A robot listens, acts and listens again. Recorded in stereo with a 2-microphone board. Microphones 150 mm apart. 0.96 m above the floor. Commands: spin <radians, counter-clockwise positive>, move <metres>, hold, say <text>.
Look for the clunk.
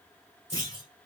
spin 0.44
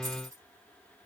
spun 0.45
hold
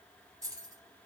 say I heard a clunk, but can't make it out now. It was about straight ahead or 125° left.